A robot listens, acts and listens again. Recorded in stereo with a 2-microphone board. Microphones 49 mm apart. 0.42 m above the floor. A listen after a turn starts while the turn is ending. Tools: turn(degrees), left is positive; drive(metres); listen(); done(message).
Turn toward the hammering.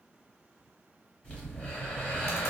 listen()
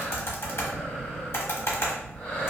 listen()
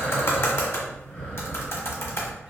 done("I can't make out hammering to turn to.")